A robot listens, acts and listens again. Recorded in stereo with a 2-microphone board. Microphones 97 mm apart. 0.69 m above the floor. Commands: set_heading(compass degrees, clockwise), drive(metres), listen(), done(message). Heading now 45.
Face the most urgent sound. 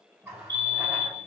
set_heading(95)
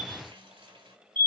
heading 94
set_heading(159)
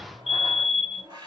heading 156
done("Found it: a fire alarm, straight ahead.")